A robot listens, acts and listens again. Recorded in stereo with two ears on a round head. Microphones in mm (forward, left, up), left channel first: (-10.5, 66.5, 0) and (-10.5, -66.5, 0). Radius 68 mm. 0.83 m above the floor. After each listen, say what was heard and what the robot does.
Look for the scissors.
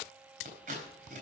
The scissors: about 55° right or 125° right. Turn 55° right.
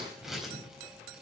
Found it: scissors, straight ahead, over 4 m away.